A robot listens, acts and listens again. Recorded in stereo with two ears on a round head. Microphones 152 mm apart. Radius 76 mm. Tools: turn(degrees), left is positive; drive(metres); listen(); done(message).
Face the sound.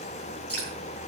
turn(degrees=30)
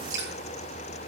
turn(degrees=-20)
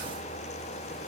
listen()
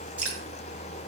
turn(degrees=-10)
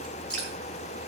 done("Found it: dripping, straight ahead, over 4 m away.")